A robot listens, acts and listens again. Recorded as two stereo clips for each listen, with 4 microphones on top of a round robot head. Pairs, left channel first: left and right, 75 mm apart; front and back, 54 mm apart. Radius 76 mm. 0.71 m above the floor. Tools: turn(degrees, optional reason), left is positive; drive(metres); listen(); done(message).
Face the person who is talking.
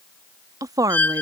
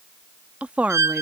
turn(degrees=-120, reason="The woman speaking: 120° right.")
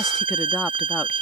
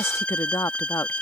listen()
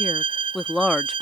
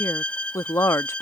done("Facing the woman speaking.")